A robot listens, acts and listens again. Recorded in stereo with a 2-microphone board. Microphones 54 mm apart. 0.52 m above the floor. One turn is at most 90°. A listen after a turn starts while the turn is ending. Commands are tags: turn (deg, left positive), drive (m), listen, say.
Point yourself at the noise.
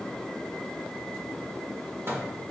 <turn deg="-45"/>
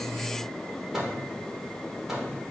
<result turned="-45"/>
<turn deg="-10"/>
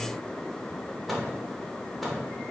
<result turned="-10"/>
<say>Facing the microwave.</say>